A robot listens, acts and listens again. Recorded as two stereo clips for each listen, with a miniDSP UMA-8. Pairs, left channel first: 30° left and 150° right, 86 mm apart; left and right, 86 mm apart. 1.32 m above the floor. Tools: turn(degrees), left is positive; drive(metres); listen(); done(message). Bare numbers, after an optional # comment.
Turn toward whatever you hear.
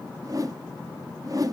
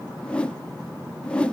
# The whoosh: 165° left.
turn(165)
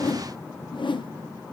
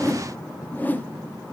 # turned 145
# The whoosh is now 20° left.
turn(20)
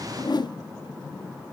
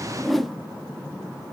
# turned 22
done("Found it: a whoosh, straight ahead, under 1 m away.")